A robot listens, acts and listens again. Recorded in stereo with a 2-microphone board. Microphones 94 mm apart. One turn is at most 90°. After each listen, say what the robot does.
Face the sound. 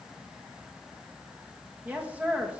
Turn 15° right.
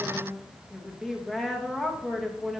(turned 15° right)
Found it: a woman speaking, straight ahead.